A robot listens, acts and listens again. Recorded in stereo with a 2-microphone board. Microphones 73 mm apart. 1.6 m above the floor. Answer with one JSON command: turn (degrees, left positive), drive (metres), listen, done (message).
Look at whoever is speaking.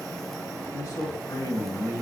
{"turn": 55}
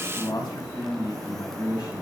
{"turn": 75}
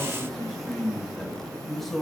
{"done": "Found it: a man speaking, straight ahead, 2 to 4 m away."}